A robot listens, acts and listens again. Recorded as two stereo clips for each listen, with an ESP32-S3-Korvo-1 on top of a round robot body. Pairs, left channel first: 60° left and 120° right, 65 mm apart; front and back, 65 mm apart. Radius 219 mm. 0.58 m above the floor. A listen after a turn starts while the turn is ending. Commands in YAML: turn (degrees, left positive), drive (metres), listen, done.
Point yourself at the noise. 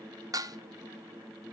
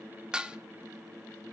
turn: -100
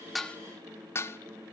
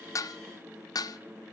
turn: 10
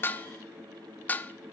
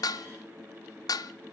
done: "Facing the dishes clattering."